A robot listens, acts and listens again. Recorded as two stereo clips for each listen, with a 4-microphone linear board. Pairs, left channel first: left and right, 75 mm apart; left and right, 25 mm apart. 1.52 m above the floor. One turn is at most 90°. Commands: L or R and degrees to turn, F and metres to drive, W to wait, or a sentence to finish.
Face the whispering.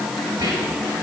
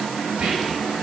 R60
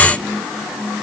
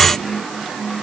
W
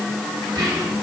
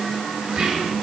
R60
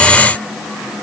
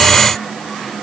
W
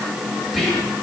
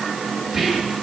Found it: whispering, straight ahead.